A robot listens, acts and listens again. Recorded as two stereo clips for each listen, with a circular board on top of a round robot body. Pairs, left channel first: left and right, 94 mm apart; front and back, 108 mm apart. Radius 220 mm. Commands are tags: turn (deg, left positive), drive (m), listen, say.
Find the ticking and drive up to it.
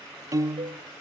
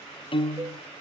<listen/>
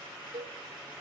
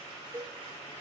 <listen/>
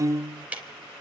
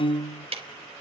<turn deg="-165"/>
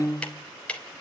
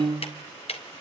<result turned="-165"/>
<turn deg="10"/>
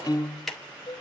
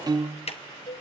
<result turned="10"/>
<drive m="1.0"/>
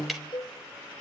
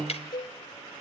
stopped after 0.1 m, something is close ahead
<say>Something is in my way. I am facing the ticking but have not reached it.</say>